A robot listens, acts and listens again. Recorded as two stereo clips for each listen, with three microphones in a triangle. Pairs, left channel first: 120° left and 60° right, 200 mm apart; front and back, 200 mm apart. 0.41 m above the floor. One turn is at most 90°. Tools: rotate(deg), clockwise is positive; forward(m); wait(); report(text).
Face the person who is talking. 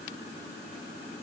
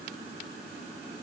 wait()
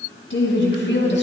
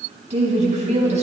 rotate(-90)
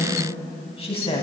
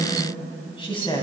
rotate(-65)
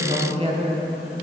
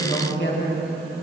report("Facing the woman speaking, 2 to 4 m away.")